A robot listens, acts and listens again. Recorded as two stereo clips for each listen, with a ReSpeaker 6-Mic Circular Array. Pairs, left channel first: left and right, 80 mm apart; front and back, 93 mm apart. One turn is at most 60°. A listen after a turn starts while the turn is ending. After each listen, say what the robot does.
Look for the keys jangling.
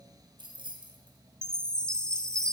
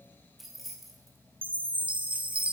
Turn 60° right.
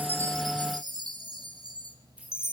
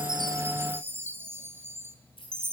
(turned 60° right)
Turn 15° right.
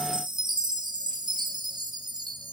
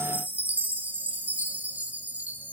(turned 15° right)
Keep listening.
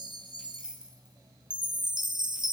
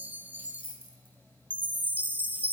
Turn 10° right.
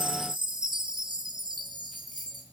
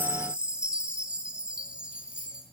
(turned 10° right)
Found it: keys jangling, straight ahead.